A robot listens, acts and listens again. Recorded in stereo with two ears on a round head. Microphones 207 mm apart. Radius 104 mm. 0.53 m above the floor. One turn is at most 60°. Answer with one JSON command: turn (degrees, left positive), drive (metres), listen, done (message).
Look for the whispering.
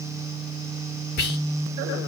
{"turn": 45}
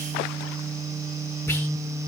{"listen": true}
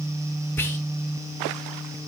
{"turn": 10}
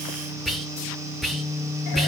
{"done": "Facing the whispering."}